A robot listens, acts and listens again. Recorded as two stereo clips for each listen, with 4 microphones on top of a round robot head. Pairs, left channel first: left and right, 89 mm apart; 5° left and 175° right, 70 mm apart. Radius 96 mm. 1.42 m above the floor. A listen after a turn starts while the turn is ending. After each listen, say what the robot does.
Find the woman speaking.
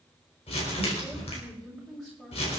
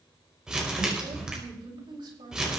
Turn 175° left.
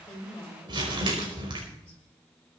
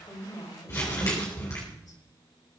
Turn 15° left.
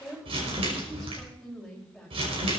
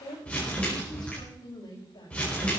Facing the woman speaking.